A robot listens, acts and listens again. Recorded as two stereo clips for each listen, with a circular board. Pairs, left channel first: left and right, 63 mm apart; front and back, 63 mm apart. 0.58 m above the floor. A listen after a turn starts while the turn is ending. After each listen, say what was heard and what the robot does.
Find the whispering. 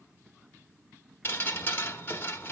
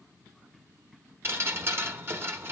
Keep listening.
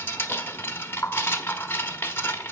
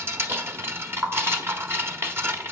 Keep listening.
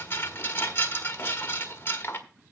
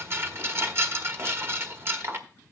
I can't make out whispering to turn to.